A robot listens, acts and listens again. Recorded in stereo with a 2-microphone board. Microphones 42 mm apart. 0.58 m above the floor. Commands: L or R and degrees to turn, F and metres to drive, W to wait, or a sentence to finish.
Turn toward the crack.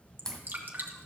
L30
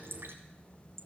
W
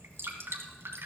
I heard a crack, but can't make it out now. It was about 20° right or 140° left.